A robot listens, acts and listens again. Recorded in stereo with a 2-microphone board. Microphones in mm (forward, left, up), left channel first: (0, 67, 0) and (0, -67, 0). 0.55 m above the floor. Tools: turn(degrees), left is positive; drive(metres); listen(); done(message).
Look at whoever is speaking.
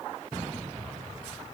listen()
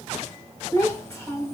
turn(degrees=20)
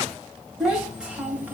turn(degrees=-10)
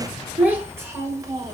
turn(degrees=-25)
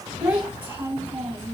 turn(degrees=-15)
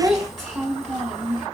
done("Facing the child speaking, 1 to 2 m away.")